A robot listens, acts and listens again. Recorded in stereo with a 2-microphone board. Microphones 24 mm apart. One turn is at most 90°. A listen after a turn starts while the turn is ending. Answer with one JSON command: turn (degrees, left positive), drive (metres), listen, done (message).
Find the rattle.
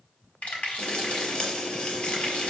{"turn": 90}
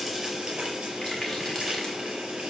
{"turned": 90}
{"listen": true}
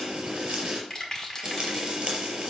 {"turn": 15}
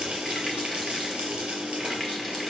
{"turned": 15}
{"listen": true}
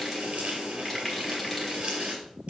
{"listen": true}
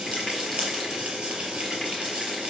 {"done": "Facing where the rattle came from. I can't hear it now."}